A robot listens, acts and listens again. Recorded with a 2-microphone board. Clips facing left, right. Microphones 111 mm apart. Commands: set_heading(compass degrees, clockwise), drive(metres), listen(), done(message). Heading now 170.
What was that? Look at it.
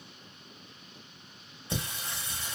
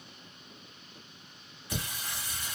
set_heading(145)
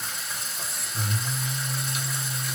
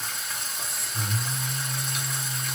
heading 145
done("Found it: singing, straight ahead.")